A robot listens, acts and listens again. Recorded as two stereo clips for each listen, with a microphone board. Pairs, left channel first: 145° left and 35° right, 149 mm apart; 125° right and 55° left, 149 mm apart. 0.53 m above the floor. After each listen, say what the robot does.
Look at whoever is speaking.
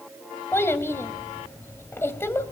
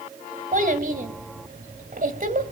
Turn 70° left.
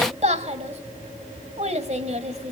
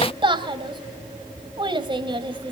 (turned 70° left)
Found it: a child speaking, straight ahead, 2 to 4 m away.